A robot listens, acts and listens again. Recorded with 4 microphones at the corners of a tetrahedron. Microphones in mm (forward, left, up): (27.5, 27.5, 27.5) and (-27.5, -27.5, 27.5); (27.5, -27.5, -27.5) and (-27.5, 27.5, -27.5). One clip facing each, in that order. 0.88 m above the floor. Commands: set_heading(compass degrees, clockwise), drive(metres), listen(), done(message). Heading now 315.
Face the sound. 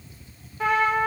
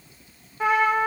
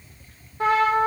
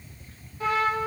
set_heading(10)
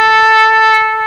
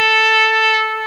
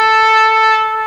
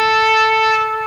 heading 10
set_heading(355)
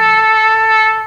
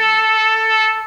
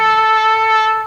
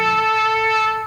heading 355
done("Facing the trumpet.")